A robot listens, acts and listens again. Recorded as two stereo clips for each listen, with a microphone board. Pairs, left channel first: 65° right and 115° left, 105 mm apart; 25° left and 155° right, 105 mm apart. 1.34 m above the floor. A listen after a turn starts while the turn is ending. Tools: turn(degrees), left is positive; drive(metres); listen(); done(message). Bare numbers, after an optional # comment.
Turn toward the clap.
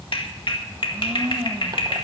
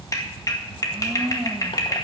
# The clap: 35° right.
turn(-35)
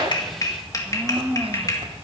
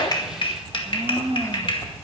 # The clap is now 15° right.
turn(-15)
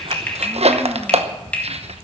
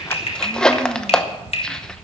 # The clap is now 10° left.
turn(10)
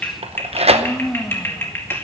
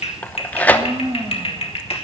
done("Facing the clap, 1 to 2 m away.")